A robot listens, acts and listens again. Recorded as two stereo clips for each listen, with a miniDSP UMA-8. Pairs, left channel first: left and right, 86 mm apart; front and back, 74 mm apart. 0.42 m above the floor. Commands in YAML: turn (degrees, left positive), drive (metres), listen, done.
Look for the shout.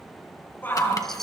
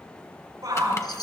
turn: 155
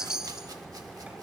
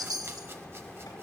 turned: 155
listen: true
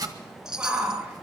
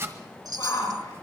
turn: -20
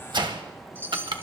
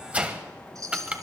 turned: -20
listen: true
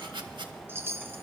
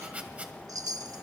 listen: true
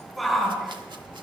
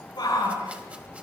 done: "Found it: a shout, straight ahead."